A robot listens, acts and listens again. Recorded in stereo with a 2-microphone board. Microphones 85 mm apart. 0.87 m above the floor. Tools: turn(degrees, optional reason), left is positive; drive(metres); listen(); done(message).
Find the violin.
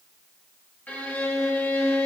turn(degrees=20, reason="The violin: about 20° left or 160° left.")
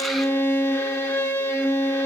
turn(degrees=140, reason="So it is at 140° left.")
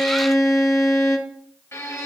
turn(degrees=35, reason="The violin is now 35° left.")
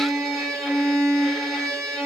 done("Facing the violin, 1 to 2 m away.")